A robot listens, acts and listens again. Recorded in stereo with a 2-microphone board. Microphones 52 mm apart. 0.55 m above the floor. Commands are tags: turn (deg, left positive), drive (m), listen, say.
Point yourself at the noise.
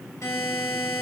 <turn deg="70"/>
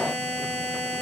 <turn deg="20"/>
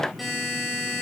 <say>Facing the buzzer, 2 to 4 m away.</say>